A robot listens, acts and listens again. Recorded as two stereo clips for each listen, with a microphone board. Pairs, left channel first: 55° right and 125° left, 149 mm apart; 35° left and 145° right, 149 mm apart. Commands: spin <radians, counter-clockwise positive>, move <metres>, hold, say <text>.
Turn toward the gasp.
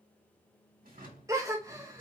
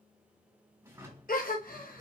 spin 0.96
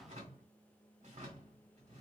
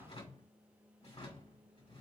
say Facing where the gasp came from. I can't hear it now.